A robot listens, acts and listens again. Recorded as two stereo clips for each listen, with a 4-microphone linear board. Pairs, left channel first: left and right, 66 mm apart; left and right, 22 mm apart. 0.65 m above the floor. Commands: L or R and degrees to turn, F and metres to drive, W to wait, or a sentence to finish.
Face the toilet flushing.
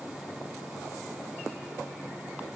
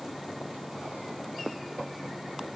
W
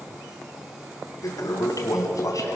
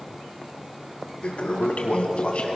L65
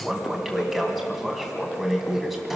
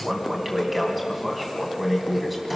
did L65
Facing the toilet flushing.